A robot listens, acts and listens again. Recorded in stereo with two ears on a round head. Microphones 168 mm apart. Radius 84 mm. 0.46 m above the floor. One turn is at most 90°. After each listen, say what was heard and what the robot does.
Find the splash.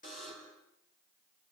Keep listening.
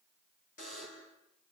Keep listening.
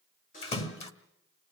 The splash: about 35° left or 145° left. Turn 35° left.
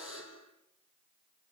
Keep listening.
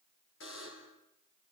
I heard a splash, but can't make it out now. It was about straight ahead or 110° left.